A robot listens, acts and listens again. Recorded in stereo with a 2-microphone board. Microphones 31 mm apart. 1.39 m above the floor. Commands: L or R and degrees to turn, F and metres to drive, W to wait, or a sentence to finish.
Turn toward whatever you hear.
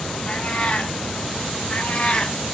L40
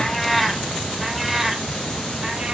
R20
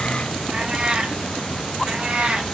R45
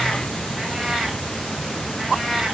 Found it: a cat meowing, straight ahead, 1 to 2 m away.